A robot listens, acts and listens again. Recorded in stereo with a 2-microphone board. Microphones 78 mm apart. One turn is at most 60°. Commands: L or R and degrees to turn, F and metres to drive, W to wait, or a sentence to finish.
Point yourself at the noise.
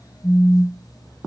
L40
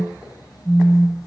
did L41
Found it: a phone buzzing, straight ahead, 2 to 4 m away.